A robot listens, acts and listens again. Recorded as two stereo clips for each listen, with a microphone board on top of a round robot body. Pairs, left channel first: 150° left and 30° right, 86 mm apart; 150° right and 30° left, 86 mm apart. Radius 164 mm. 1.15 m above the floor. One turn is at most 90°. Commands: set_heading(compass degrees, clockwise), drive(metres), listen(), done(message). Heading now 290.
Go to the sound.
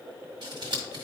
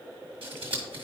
set_heading(280)
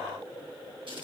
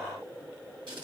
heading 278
drive(1.0)
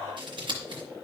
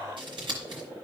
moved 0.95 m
drive(1.0)
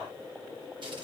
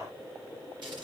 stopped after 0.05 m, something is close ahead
done("Arrived at the scissors, straight ahead.")